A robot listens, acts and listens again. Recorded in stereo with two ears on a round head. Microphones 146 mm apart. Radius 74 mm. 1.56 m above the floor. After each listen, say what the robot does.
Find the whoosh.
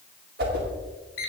Turn 65° right.
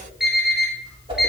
Turn 30° right.
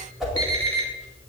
Facing the whoosh, 2 to 4 m away.